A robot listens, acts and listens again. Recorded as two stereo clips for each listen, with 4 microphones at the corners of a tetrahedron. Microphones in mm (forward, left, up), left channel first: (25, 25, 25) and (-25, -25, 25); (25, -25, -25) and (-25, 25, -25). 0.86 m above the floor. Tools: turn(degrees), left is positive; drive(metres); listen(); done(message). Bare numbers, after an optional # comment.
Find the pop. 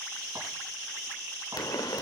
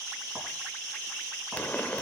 # The pop: 25° left.
turn(25)
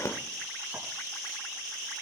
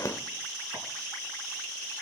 done("Facing the pop.")